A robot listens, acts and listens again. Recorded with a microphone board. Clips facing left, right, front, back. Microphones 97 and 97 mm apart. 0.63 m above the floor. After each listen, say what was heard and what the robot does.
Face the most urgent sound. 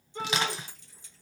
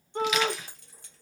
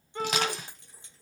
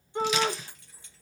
The shout: 110° right. Turn 110° right.
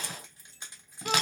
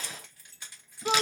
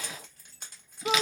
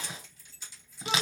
The shout is now 20° right. Turn 20° right.
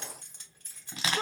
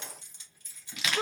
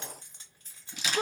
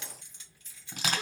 Found it: a shout, straight ahead.